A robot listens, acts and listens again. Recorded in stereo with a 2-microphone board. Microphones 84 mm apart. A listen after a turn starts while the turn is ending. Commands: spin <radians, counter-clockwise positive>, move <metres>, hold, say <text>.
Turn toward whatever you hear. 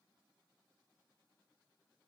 hold
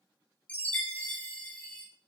spin 0.35
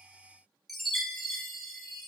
say Facing the chime.